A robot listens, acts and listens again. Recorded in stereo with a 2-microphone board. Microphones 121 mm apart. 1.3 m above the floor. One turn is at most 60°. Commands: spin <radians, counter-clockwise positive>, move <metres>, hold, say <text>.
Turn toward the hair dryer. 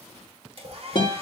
spin -0.96
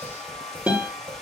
say Facing the hair dryer.